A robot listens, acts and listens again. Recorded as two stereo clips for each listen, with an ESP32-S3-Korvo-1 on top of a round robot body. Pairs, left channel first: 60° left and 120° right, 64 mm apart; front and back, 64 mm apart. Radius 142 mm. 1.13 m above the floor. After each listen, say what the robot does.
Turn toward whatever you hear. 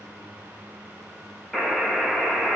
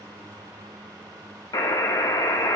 Turn 30° right.
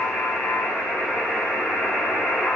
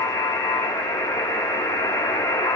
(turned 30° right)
Turn 20° right.
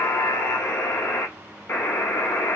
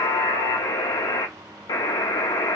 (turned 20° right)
Facing the buzzer, under 1 m away.